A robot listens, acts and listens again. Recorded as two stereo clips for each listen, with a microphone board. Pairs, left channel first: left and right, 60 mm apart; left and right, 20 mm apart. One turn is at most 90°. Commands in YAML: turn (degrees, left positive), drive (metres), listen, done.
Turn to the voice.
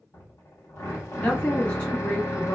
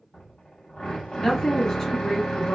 turn: 20
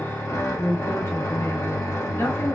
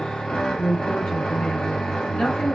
turn: 90
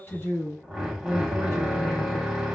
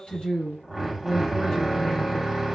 turn: 50
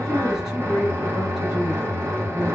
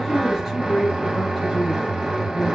done: "Facing the woman speaking."